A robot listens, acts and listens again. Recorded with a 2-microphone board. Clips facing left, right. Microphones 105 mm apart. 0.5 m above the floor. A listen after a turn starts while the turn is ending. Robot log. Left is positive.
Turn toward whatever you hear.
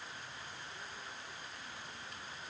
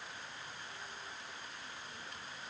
cmd idle
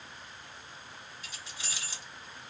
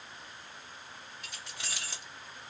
note: The keys jangling: about 60° right or 120° right.
cmd yaw -60
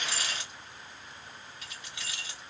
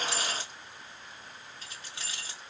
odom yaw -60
note: So it is at 40° right.
cmd yaw -40
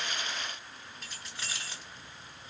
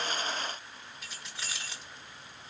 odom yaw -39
end: Found it: keys jangling, straight ahead.